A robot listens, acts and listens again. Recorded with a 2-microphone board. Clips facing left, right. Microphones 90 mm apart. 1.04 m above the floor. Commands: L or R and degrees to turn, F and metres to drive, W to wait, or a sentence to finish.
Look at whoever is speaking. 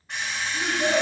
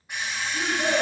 R45
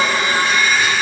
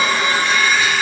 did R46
W
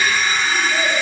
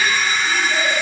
W
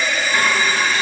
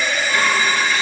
I heard a child speaking, but can't make it out now. It was about straight ahead or 90° right.